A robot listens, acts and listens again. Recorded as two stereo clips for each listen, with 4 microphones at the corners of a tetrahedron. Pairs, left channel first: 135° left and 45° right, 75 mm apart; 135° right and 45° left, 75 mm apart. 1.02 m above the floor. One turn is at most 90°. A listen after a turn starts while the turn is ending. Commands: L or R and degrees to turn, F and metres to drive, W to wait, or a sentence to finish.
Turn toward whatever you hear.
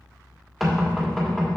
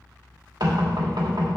L45
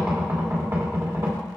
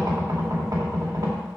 L10
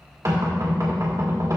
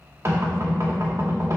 Found it: knocking, straight ahead, 2 to 4 m away.